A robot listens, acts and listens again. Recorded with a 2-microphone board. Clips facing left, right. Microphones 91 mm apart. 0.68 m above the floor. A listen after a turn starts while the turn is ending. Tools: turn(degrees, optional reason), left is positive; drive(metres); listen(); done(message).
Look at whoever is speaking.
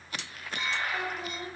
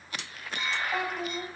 turn(degrees=-70, reason="The child speaking: about 70° right or 110° right.")
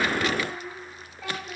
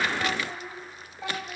turn(degrees=-25, reason="So it is at 25° right.")
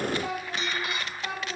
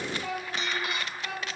turn(degrees=30, reason="The child speaking is now 30° left.")
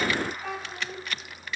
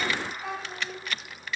done("Facing the child speaking, 2 to 4 m away.")